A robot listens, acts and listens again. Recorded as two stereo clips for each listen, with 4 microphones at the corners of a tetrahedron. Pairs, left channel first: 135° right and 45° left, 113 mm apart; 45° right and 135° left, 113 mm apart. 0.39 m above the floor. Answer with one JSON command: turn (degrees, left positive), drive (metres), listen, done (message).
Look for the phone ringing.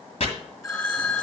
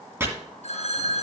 {"turn": -70}
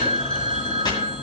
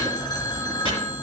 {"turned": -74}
{"done": "Found it: a phone ringing, straight ahead."}